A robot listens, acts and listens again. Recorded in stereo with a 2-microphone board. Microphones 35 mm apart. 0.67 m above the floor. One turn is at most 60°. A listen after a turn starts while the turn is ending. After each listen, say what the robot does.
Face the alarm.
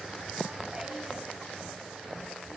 Keep listening.
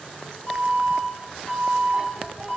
Turn 40° left.
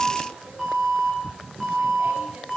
Found it: an alarm, straight ahead.